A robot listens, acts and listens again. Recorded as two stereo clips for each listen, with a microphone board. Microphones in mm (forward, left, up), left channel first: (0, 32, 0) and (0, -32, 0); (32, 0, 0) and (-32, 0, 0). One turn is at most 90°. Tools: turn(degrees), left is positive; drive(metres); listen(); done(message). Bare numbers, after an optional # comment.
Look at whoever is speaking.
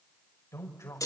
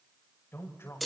# The man speaking: 50° left.
turn(50)
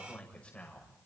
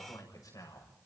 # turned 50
# The man speaking is now 20° left.
turn(20)
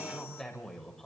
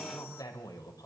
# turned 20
done("Facing the man speaking.")